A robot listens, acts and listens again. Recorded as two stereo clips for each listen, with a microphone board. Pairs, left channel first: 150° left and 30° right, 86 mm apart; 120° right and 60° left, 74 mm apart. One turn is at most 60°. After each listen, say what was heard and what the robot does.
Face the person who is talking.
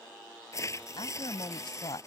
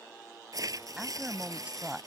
The woman speaking: 135° left. Turn 60° left.
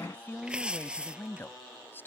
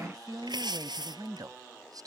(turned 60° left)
The woman speaking is now 85° left. Turn 60° left.
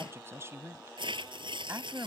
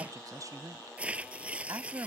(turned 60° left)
The woman speaking is now 25° left. Turn 25° left.
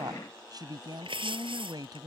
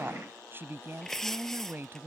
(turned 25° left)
Found it: a woman speaking, straight ahead.